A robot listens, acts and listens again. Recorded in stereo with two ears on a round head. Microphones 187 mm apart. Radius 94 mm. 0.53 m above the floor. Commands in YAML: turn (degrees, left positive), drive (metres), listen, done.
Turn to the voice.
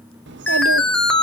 turn: -55
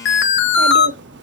turn: -60
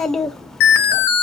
done: "Facing the child speaking."